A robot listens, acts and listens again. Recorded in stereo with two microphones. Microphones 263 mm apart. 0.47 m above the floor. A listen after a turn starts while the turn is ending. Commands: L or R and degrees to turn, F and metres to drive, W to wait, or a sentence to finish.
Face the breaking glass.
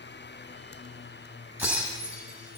R30
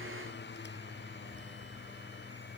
W
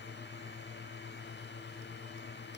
I heard breaking glass, but can't make it out now. It was about 20° left or 140° right.